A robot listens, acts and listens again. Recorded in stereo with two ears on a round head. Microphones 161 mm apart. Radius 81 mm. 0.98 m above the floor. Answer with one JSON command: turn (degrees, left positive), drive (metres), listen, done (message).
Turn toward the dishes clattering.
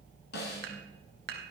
{"turn": -60}
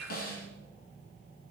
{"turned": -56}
{"done": "Facing the dishes clattering, 2 to 4 m away."}